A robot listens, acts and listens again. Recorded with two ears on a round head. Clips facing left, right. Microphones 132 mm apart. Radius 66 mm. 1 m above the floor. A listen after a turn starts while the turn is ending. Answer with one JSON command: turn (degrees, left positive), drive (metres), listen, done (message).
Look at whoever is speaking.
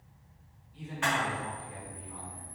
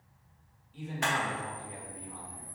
{"turn": -65}
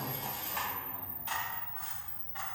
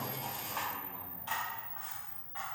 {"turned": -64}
{"listen": true}
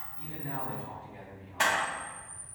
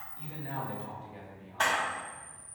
{"turn": -45}
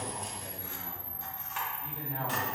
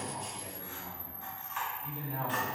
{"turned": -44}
{"done": "Facing the man speaking, 1 to 2 m away."}